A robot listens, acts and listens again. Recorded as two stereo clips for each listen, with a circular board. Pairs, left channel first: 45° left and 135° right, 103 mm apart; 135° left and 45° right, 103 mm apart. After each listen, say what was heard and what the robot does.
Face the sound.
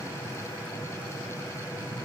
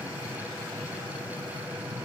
Keep listening.
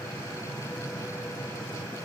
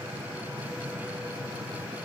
Keep listening.
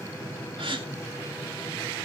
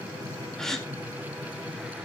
The gasp: 140° right. Turn 140° right.
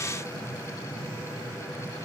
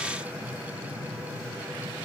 Facing where the gasp came from. I can't hear it now.